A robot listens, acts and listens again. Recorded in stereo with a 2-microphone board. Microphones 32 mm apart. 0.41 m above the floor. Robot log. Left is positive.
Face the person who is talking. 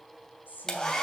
note: The woman speaking: about 70° left or 110° left.
cmd yaw +70
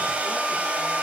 cmd idle
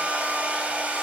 cmd idle
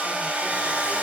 end: I heard a woman speaking, but can't make it out now. It was about straight ahead or 40° left.